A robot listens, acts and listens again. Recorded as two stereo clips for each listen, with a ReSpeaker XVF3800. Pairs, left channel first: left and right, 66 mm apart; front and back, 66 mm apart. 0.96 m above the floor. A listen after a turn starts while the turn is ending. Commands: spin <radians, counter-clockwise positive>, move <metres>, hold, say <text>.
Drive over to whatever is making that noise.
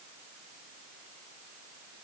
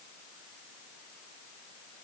hold
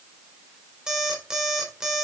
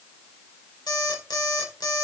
spin -0.17
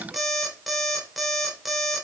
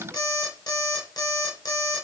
move 1.0
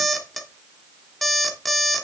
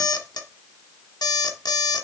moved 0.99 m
move 1.0
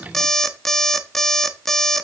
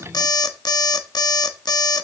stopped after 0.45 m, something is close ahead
say Arrived at the alarm clock, straight ahead.